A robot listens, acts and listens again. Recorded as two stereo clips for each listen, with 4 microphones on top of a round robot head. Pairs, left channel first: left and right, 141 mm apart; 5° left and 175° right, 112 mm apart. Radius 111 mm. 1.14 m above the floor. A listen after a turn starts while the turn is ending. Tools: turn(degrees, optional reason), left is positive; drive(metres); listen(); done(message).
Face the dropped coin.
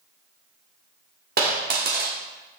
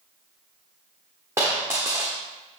turn(degrees=-95, reason="The dropped coin: 95° right.")
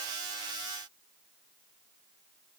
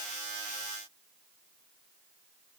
done("Facing where the dropped coin came from. I can't hear it now.")